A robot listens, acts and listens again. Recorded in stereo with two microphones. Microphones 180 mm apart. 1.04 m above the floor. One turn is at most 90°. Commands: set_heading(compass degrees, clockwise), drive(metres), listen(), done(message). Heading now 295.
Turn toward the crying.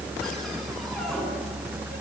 listen()
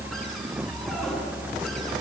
listen()
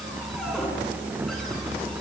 done("I can't make out crying.")